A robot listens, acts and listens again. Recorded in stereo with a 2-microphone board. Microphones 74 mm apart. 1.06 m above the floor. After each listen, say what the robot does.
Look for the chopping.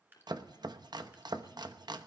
Turn 90° right.
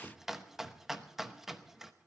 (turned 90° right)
Facing the chopping.